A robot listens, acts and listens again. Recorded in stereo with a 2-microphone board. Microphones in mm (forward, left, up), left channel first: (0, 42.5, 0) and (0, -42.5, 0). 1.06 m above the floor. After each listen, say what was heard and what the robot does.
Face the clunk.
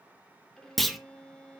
Turn 30° left.
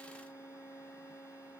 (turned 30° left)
Keep listening.
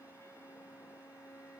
I heard a clunk, but can't make it out now. It was about 30° right or 150° left.